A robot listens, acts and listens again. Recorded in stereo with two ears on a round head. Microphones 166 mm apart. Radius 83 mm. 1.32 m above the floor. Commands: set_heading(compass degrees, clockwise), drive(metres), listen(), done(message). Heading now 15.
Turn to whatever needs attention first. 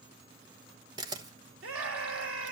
set_heading(105)
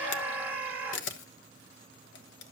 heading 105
set_heading(115)
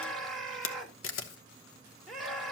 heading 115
done("Facing the scream, 2 to 4 m away.")